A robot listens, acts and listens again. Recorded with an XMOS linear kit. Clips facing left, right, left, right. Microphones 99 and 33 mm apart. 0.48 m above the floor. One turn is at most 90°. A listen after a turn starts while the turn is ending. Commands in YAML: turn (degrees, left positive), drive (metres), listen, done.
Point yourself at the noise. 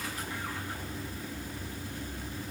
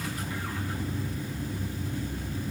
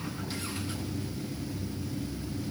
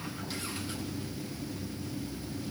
listen: true
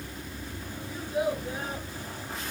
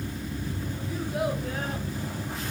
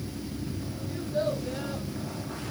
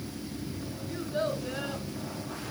turn: -75
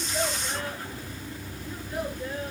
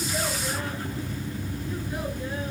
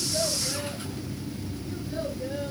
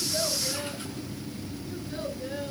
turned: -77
listen: true
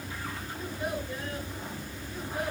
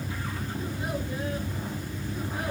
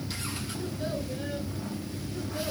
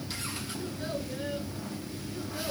listen: true
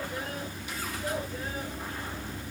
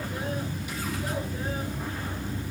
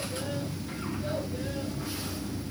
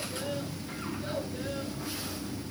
done: "I heard a child speaking, but can't make it out now. It was about straight ahead or 30° right."